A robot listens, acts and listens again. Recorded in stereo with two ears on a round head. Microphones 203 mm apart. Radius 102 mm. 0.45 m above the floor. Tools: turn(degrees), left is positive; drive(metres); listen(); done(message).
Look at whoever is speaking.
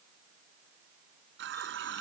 listen()
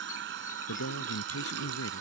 turn(degrees=70)
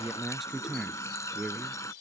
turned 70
done("Found it: a man speaking, straight ahead.")